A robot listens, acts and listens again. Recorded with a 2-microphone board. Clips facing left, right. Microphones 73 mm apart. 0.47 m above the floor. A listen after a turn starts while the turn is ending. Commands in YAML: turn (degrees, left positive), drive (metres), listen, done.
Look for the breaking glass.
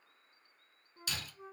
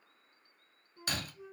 turn: -50
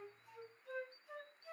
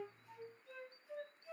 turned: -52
listen: true
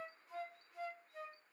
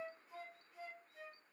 done: "I heard breaking glass, but can't make it out now. It was about 5° left or 80° right."